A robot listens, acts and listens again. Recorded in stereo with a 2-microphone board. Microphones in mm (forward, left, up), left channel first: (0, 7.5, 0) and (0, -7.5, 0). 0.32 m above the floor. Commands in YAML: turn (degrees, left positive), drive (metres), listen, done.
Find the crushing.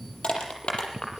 turn: 90
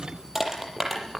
turn: -15
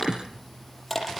done: "Facing the crushing, over 4 m away."